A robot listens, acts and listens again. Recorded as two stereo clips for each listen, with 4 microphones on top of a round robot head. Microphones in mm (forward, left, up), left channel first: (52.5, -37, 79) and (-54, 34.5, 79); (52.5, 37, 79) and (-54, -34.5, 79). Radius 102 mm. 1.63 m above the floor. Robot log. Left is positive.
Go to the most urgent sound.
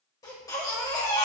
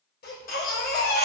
note: The baby crying: 30° left.
cmd yaw +30
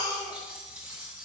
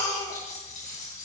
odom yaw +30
cmd fwd 1.0
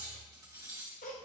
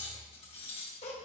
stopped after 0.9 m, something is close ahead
end: Arrived at the baby crying, straight ahead.